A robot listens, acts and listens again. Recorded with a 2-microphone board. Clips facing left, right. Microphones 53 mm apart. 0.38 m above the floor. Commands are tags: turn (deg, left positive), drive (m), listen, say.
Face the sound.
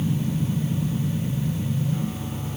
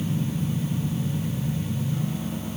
<listen/>
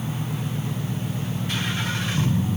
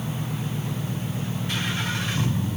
<listen/>
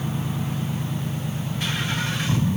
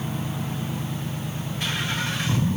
<say>I can't make out anything to turn to.</say>